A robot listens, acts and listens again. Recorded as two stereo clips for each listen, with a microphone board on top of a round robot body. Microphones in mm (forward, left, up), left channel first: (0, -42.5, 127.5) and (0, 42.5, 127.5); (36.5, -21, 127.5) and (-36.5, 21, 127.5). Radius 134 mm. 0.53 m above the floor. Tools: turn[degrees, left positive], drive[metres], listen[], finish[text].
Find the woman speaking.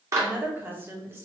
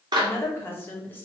Thought: The woman speaking: 35° left.
Action: turn[35]
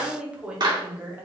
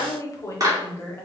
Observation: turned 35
Thought: The woman speaking is now 25° left.
Action: turn[25]
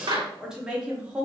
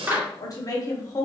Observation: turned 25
Thought: The woman speaking is now 15° left.
Action: turn[15]
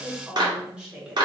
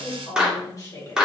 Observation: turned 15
Thought: The woman speaking is now 10° left.
Action: turn[10]
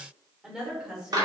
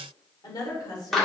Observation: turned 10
Thought: The woman speaking is now 10° left.
Action: turn[10]
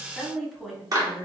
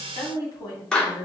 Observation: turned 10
Action: finish[Found it: a woman speaking, straight ahead.]